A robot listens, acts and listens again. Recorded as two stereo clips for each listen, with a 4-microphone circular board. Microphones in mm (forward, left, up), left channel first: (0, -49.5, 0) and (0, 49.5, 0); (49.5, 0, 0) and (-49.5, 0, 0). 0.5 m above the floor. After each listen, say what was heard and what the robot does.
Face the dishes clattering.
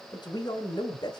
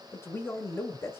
Keep listening.
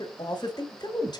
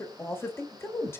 Keep listening.
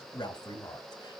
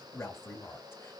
I can't make out dishes clattering to turn to.